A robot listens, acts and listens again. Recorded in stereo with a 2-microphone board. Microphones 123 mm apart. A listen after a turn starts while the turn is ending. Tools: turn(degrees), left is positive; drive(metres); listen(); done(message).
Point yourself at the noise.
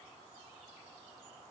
listen()
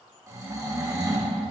turn(degrees=-20)
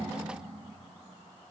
listen()
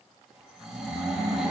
done("Found it: snoring, straight ahead.")